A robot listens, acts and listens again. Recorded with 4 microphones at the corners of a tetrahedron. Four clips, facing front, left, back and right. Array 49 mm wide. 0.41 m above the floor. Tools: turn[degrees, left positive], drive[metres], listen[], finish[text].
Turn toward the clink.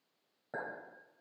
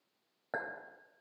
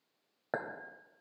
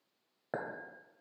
Thought: The clink: 175° right.
Action: turn[-175]
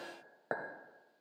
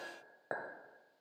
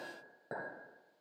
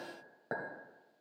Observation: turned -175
Thought: The clink is now 25° left.
Action: turn[25]
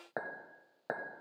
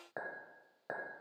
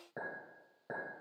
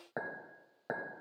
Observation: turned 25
Action: finish[Facing the clink, 1 to 2 m away.]